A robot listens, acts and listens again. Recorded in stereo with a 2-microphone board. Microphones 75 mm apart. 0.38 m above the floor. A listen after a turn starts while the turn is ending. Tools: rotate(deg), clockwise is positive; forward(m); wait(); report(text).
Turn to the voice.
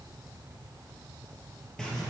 wait()
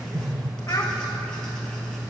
rotate(-45)
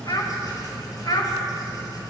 rotate(-75)
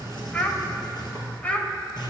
rotate(-20)
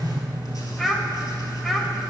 report("Facing the child speaking.")